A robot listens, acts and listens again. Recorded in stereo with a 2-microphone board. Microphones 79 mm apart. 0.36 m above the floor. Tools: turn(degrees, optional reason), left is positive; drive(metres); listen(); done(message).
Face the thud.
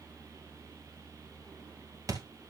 turn(degrees=-45, reason="The thud: about 45° right or 135° right.")
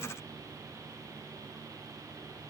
listen()
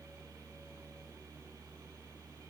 done("I heard a thud, but can't make it out now. It was about straight ahead or 90° right.")